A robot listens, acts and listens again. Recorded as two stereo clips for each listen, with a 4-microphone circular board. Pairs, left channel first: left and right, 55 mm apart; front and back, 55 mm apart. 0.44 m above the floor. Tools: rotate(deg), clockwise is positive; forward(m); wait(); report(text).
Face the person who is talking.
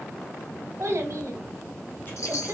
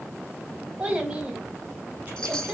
rotate(115)
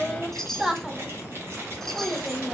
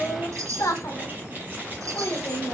rotate(15)
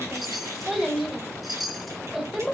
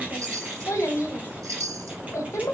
report("Facing the child speaking, 1 to 2 m away.")